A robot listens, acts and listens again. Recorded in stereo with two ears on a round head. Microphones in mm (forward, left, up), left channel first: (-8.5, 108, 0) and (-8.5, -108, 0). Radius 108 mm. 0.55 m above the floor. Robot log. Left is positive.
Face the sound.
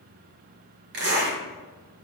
note: The zipper: about 50° right or 130° right.
cmd yaw -50
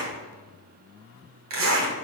note: So it is at 80° right.
cmd yaw -80
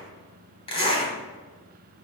note: The zipper is now 25° left.
cmd yaw +25
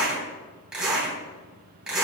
end: Found it: a zipper, straight ahead, 2 to 4 m away.